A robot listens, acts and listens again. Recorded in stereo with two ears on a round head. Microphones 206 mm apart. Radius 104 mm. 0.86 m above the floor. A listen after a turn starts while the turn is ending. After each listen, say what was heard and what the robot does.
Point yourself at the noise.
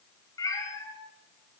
Turn 30° left.
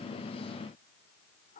Keep listening.
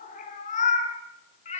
So it is at 150° left. Turn 150° left.
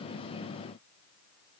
Keep listening.
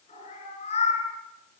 The cat meowing is now 30° left. Turn 30° left.
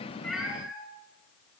Found it: a cat meowing, straight ahead, over 4 m away.